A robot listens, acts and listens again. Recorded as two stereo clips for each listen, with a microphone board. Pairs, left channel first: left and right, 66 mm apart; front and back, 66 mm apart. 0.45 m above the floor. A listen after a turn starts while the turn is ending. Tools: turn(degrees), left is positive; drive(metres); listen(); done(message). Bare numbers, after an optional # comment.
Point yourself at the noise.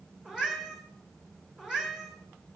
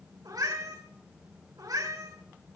# The cat meowing: 170° right.
turn(-170)
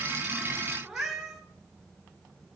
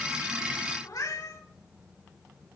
done("Facing the cat meowing, over 4 m away.")